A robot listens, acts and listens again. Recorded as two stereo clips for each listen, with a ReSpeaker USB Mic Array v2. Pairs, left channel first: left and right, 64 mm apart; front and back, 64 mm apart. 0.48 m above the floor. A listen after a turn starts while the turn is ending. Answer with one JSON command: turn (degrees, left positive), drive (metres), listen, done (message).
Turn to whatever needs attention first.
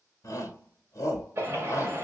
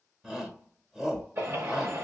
{"turn": 100}
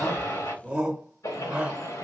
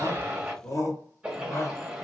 {"turn": -20}
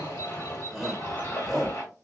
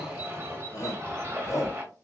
{"done": "Found it: a shout, straight ahead, 1 to 2 m away."}